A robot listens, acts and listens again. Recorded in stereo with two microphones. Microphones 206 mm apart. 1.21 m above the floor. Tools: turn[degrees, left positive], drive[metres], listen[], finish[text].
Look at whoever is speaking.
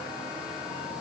Action: listen[]
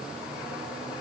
Action: listen[]
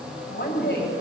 Thought: The woman speaking: about 60° left or 120° left.
Action: turn[60]
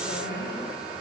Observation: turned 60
Thought: So it is at 60° left.
Action: turn[60]
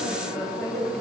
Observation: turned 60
Action: finish[Facing the woman speaking.]